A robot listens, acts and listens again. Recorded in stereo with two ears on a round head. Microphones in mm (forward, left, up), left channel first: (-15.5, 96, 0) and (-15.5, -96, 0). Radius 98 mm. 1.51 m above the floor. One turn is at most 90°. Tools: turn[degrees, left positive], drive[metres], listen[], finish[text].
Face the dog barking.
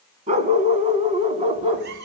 Thought: The dog barking: about 30° right or 150° right.
Action: turn[-30]
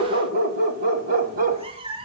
Thought: So it is at 135° right.
Action: turn[-90]
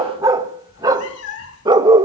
Thought: The dog barking is now 20° right.
Action: turn[-20]
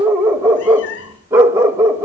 Thought: The dog barking is now 15° right.
Action: turn[-15]
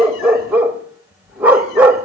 Thought: The dog barking is now 10° right.
Action: turn[-10]
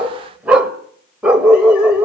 Action: finish[Found it: a dog barking, straight ahead, 1 to 2 m away.]